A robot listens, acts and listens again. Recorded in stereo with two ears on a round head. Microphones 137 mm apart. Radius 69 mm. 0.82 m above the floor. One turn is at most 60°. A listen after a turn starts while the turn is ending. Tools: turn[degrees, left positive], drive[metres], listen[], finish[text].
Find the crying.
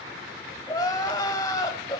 Thought: The crying: about 25° left or 155° left.
Action: turn[25]
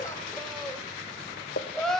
Action: finish[Found it: crying, straight ahead, 1 to 2 m away.]